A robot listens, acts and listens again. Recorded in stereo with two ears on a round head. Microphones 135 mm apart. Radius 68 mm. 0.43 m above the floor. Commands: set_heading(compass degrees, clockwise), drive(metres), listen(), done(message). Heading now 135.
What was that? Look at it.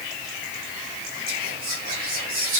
set_heading(200)
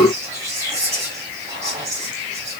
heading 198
set_heading(223)
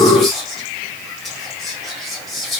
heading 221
done("Facing the whispering.")